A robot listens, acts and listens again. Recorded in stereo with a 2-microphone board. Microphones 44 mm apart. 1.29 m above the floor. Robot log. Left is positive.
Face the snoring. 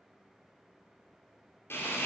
cmd idle
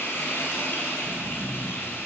note: The snoring: about 25° right or 155° right.
cmd yaw -25
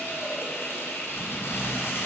note: So it is at 125° right.
cmd yaw -125
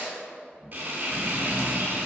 end: Facing the snoring, 1 to 2 m away.